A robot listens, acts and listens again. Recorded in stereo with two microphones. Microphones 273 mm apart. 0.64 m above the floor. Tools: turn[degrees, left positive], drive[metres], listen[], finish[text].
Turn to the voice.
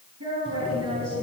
Thought: The woman speaking: about 65° right or 115° right.
Action: turn[-65]
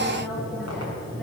Action: listen[]
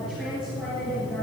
Action: finish[Found it: a woman speaking, straight ahead.]